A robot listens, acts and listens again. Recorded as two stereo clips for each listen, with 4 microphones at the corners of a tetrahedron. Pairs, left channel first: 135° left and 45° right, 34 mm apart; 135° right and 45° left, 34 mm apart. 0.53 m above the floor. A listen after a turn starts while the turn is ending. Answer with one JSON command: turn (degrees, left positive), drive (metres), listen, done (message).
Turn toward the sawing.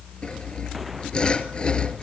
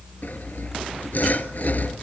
{"turn": -165}
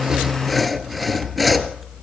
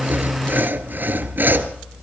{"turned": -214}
{"turn": 45}
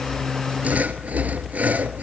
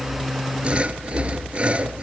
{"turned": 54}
{"done": "Found it: sawing, straight ahead."}